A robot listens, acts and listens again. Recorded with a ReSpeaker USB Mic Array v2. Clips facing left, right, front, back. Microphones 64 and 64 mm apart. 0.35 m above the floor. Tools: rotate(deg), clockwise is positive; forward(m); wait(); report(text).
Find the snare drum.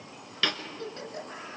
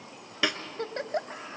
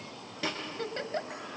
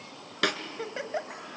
rotate(165)
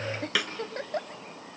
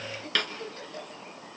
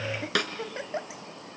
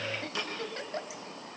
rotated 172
report("Facing the snare drum, 1 to 2 m away.")